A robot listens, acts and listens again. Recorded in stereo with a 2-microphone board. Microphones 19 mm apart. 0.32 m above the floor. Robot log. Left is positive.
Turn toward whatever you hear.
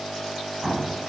note: The explosion: about 35° right or 145° right.
cmd yaw -35
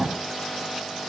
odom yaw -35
note: So it is at 105° right.
cmd yaw -105
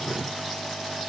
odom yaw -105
end: I heard an explosion from this way, but can't make it out now.